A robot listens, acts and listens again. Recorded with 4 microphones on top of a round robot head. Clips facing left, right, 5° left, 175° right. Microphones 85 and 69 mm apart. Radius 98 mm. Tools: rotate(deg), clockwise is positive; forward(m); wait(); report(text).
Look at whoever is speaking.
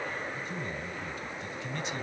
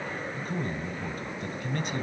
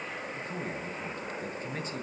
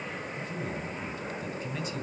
rotate(50)
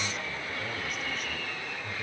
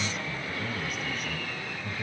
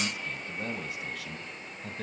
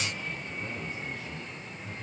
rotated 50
report("Facing the man speaking.")